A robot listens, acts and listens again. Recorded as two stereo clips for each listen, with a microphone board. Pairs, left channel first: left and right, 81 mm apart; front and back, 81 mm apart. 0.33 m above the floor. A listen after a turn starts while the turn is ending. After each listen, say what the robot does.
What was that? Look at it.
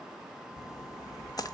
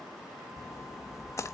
Turn 50° left.
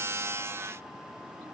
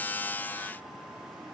I heard a splash from this way, but can't make it out now.